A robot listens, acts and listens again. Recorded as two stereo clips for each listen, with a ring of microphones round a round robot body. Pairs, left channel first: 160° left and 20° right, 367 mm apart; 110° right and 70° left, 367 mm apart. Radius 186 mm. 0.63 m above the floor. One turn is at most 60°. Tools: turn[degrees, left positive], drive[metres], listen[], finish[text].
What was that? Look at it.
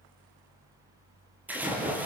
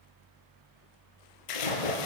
Thought: The splash: 110° right.
Action: turn[-60]
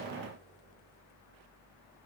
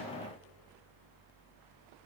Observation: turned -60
Thought: Nothing new. It was at 50° right.
Action: turn[-50]
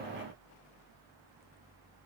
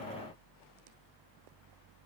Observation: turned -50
Action: finish[Facing where the splash came from. I can't hear it now.]